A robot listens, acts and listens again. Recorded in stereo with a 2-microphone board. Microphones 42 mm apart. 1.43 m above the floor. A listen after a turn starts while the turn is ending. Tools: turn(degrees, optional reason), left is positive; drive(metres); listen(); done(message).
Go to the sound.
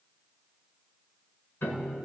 turn(degrees=65, reason="The piano: about 65° left or 115° left.")
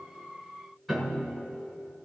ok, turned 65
drive(metres=1.0)
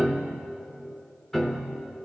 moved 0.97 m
turn(degrees=10, reason="The piano is now 10° left.")
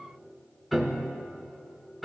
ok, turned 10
drive(metres=1.0)
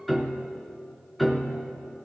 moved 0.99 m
drive(metres=1.0)
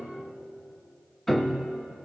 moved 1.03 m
turn(degrees=10, reason="The piano is now 10° left.")
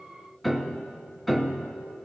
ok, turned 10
drive(metres=1.0)
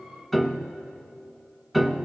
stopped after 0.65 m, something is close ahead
done("Arrived at the piano, straight ahead.")